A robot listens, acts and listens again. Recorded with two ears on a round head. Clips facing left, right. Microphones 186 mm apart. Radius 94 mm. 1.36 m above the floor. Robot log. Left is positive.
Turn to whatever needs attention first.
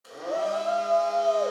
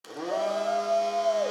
cmd yaw -30
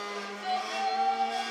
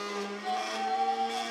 note: So it is at 30° left.
cmd yaw +30
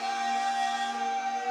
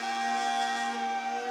note: The shout is now 10° right.
cmd yaw -10
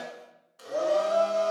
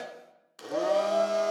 end: Facing the shout.